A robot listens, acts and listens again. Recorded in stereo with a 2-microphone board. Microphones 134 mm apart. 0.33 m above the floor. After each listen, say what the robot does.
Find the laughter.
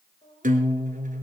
Turn 40° left.
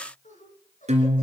Turn 115° left.
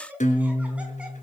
Turn 10° right.
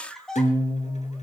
Found it: laughter, straight ahead, 2 to 4 m away.